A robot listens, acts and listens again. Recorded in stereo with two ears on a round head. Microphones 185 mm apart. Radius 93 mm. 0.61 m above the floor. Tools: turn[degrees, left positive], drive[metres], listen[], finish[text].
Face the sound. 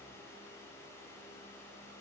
Action: listen[]
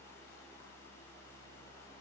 Action: listen[]
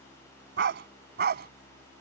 Thought: The dog barking: about 50° right or 130° right.
Action: turn[-50]
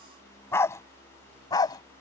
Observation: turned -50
Thought: So it is at 20° left.
Action: turn[20]
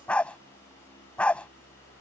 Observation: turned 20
Action: finish[Facing the dog barking.]